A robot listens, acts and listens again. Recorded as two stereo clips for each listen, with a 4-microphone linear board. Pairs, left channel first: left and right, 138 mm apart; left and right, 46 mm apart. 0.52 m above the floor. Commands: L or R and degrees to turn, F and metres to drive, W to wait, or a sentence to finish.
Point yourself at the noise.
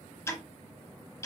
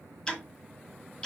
L20
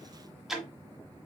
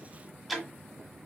Found it: ticking, straight ahead, 1 to 2 m away.